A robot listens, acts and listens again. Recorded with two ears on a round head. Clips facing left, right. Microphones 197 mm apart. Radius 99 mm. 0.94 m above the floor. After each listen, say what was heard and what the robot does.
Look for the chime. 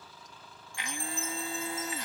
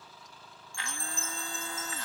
Turn 90° right.
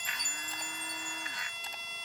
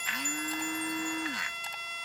Keep listening.
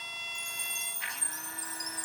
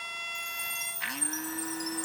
Found it: a chime, straight ahead.